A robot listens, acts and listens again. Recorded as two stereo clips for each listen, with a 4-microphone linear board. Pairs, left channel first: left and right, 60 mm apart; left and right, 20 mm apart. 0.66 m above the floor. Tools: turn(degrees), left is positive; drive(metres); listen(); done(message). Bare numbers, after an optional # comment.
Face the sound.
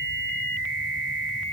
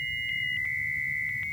listen()
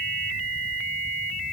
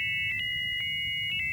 listen()
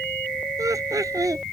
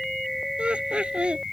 # The laughter: about 75° right or 105° right.
turn(-75)
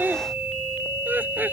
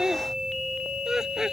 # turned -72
# So it is at 30° right.
turn(-30)
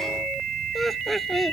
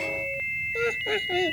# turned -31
done("Facing the laughter.")